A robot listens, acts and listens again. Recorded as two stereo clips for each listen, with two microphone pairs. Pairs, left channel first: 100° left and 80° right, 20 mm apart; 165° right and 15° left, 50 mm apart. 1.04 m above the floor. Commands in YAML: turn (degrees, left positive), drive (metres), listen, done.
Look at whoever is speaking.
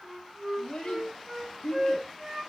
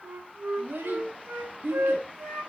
turn: 55
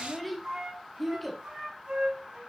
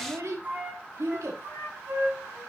turn: 15
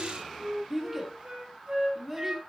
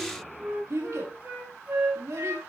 done: "Facing the child speaking."